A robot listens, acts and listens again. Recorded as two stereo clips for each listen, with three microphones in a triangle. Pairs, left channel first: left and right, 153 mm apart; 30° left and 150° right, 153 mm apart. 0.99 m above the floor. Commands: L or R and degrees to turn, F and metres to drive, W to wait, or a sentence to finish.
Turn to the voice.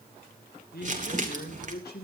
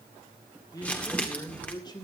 L90
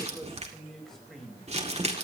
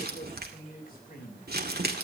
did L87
Facing the man speaking.